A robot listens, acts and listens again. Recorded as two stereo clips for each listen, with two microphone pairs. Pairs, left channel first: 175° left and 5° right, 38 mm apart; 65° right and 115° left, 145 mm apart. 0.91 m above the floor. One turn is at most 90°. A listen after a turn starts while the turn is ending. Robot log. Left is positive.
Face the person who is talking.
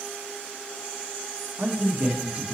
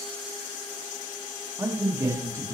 note: The man speaking: 45° left.
cmd yaw +45
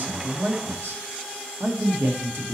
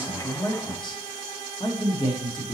end: Facing the man speaking, 1 to 2 m away.